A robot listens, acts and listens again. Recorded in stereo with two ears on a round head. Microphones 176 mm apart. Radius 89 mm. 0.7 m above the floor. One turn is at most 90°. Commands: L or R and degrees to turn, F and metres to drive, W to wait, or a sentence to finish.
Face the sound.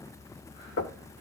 L65
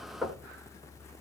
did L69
Facing the knocking.